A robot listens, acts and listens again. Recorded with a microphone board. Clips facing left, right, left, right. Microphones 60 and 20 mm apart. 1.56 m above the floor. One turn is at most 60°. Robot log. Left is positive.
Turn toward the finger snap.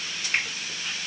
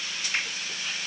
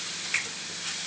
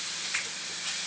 note: The finger snap: about 35° left or 145° left.
cmd yaw +35
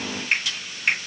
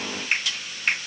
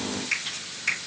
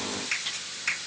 end: Facing the finger snap.